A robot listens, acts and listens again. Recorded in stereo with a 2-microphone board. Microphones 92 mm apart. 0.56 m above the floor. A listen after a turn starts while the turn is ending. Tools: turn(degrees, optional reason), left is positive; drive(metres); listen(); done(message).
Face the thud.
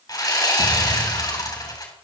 turn(degrees=-25, reason="The thud: about 25° right or 155° right.")
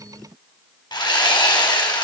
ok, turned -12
listen()
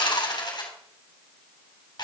done("I heard a thud, but can't make it out now. It was about 15° right or 140° right.")